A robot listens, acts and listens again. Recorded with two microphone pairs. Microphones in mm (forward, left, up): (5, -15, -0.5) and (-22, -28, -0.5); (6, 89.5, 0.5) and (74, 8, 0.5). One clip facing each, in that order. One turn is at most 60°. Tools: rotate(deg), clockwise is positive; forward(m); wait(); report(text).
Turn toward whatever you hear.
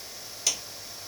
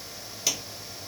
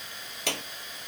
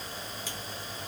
rotate(-60)
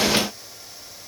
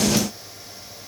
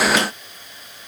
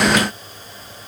rotate(-55)
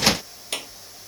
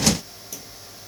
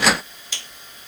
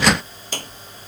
report("Facing the clap.")